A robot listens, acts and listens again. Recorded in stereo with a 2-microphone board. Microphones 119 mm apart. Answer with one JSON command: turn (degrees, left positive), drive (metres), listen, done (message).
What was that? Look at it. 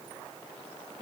{"listen": true}
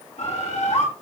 {"turn": 90}
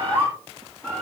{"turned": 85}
{"turn": 15}
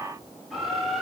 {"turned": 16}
{"done": "Facing the bird."}